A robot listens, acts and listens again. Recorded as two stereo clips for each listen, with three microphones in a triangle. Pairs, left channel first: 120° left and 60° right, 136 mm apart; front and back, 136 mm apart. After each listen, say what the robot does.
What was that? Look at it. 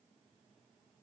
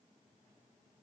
Keep listening.
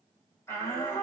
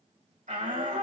Turn 170° right.
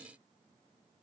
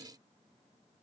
Keep listening.
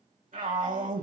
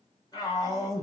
Turn 60° right.
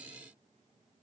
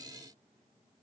Keep listening.
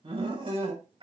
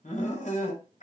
Turn 15° right.
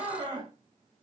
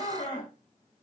Found it: a shout, straight ahead.